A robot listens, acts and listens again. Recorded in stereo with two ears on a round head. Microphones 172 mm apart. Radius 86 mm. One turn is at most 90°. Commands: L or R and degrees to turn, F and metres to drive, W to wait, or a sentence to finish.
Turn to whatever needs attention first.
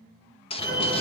L20
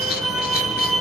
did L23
Facing the fire alarm, over 4 m away.